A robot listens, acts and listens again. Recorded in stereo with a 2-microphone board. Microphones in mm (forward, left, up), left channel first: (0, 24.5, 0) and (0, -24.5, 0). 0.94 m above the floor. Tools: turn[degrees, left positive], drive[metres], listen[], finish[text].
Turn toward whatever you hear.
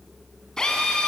Action: turn[30]
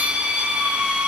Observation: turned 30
Thought: So it is at 20° right.
Action: turn[-20]
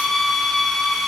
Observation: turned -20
Action: finish[Found it: a drill, straight ahead, over 4 m away.]